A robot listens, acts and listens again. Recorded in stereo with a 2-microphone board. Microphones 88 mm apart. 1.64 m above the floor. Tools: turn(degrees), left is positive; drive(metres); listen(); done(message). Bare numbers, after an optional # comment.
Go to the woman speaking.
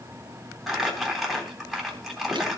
listen()
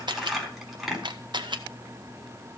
listen()
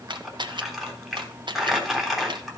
done("I can't make out a woman speaking to turn to.")